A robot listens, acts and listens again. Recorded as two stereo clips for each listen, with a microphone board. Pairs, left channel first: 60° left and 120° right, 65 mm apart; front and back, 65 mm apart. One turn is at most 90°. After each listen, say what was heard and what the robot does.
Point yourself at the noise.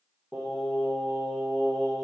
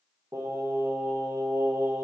The singing: 155° left. Turn 90° left.
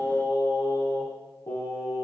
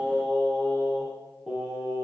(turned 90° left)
The singing is now 100° left. Turn 90° left.
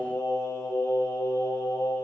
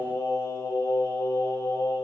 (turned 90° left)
The singing is now 20° left. Turn 20° left.
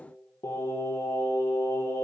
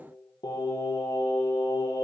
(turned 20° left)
The singing is now 10° left. Turn 10° left.
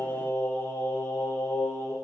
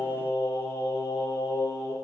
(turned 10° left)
Found it: singing, straight ahead, over 4 m away.